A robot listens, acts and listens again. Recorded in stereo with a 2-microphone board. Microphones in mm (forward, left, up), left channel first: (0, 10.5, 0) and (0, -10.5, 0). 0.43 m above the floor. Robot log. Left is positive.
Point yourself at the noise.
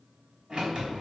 note: The sliding door: about 45° right or 135° right.
cmd yaw -45
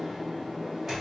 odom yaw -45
note: So it is at 10° right.
cmd yaw -10
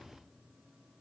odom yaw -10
cmd idle
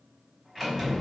end: Facing the sliding door, 2 to 4 m away.